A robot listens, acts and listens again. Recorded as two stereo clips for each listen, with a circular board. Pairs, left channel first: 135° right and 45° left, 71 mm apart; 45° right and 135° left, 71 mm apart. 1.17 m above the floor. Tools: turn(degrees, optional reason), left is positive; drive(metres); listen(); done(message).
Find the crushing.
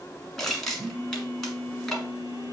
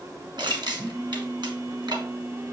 turn(degrees=135, reason="The crushing: 135° left.")
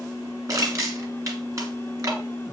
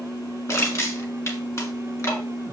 done("Facing the crushing.")